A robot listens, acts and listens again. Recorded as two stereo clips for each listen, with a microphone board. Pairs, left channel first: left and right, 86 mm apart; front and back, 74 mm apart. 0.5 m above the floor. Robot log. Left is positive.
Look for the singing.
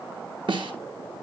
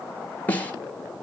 cmd idle
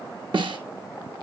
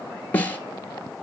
cmd idle
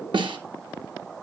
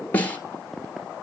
end: I can't make out singing to turn to.